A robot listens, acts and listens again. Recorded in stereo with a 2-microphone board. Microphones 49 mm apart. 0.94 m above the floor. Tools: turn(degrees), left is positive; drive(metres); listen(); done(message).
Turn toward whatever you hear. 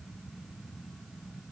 listen()
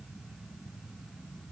listen()
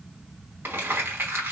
turn(degrees=-50)
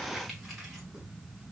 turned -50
listen()
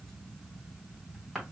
done("Found it: crumpling, straight ahead, 2 to 4 m away.")